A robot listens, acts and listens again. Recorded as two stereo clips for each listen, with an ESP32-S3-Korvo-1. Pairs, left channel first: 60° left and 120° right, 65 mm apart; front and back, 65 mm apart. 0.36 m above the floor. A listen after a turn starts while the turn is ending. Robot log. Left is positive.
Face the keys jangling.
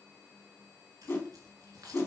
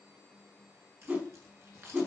note: The keys jangling: 135° right.
cmd yaw -135
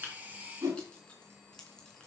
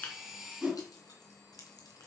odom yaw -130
note: The keys jangling is now 15° right.
cmd yaw -15
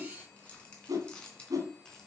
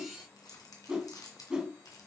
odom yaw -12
note: The keys jangling is now 20° right.
cmd yaw -20
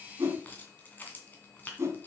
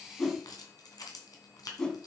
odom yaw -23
end: Found it: keys jangling, straight ahead.